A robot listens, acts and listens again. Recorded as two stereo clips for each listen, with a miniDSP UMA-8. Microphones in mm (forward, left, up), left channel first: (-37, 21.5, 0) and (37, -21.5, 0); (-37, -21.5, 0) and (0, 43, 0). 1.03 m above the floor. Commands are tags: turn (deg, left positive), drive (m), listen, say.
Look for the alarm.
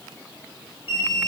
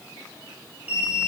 <turn deg="130"/>
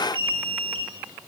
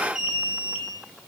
<turn deg="-25"/>
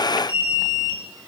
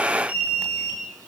<turn deg="-10"/>
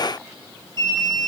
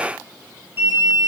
<say>Found it: an alarm, straight ahead, 2 to 4 m away.</say>